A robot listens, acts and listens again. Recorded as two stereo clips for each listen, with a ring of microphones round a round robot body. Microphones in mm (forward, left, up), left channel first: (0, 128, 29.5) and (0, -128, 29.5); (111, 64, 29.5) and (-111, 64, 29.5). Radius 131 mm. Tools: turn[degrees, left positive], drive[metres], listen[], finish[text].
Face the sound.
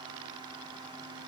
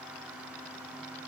Action: listen[]
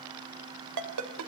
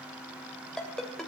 Thought: The ringtone: 90° right.
Action: turn[-90]
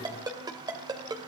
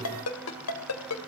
Thought: The ringtone is now 15° right.
Action: turn[-15]
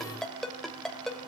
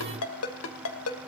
Action: finish[Facing the ringtone, 2 to 4 m away.]